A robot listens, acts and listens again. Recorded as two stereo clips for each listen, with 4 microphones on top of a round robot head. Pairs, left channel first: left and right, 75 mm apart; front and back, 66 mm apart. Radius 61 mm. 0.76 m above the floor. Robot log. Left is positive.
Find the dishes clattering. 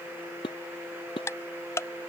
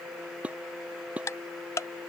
note: The dishes clattering: 110° left.
cmd yaw +110
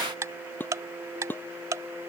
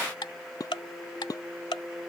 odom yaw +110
note: The dishes clattering is now 25° left.
cmd yaw +25
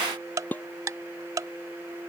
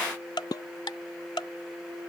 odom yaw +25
note: The dishes clattering is now 25° left.
cmd yaw +25
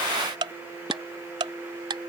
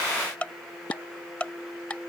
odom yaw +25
cmd idle
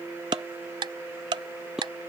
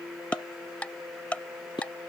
end: Found it: dishes clattering, straight ahead.